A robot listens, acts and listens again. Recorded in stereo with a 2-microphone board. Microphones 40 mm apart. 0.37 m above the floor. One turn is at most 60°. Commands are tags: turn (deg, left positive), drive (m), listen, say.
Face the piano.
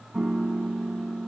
<turn deg="-20"/>
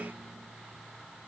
<listen/>
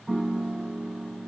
<say>Facing the piano.</say>